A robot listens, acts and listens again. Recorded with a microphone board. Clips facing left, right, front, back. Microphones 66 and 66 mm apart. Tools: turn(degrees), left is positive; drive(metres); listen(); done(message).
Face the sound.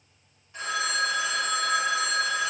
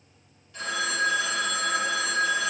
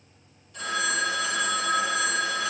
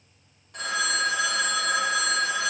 turn(degrees=155)
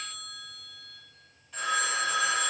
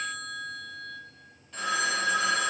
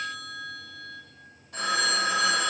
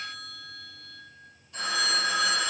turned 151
done("Facing the phone ringing.")